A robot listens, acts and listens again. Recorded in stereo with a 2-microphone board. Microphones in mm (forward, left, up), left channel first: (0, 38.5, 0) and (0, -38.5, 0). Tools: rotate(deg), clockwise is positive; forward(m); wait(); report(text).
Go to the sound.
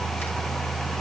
wait()
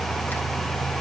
wait()
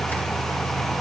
report("I can't make out anything to turn to.")